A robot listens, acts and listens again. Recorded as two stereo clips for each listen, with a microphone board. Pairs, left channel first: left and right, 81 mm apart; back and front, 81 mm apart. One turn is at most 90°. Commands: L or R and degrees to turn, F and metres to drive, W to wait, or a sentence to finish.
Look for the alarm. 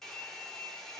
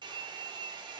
W
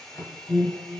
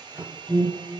L90
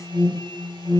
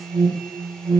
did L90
L35
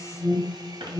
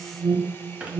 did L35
L15
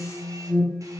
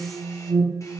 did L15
Found it: an alarm, straight ahead, 2 to 4 m away.